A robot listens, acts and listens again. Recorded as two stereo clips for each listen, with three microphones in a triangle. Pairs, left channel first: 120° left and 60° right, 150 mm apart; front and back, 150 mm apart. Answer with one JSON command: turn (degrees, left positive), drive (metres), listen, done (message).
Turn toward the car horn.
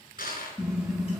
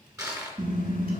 {"turn": -145}
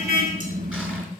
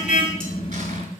{"turn": -40}
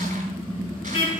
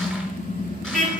{"turn": 15}
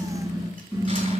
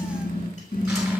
{"done": "Facing the car horn, over 4 m away."}